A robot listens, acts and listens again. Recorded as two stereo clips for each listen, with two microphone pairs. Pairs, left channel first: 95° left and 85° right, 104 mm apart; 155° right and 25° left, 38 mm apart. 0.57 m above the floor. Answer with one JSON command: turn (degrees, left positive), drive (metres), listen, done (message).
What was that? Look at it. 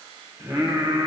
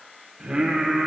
{"turn": -60}
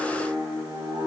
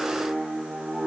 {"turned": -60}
{"turn": -55}
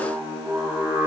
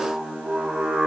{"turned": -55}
{"turn": -30}
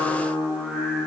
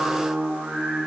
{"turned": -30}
{"turn": -10}
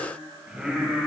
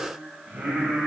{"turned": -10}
{"turn": -10}
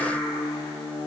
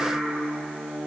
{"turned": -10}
{"done": "Facing the singing, 2 to 4 m away."}